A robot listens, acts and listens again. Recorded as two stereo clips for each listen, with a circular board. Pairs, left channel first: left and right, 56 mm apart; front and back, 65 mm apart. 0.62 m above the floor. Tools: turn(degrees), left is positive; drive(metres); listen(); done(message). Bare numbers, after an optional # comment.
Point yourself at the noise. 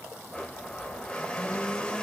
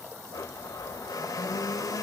# The blender: 20° left.
turn(20)
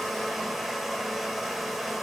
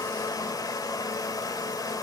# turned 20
done("Found it: a blender, straight ahead.")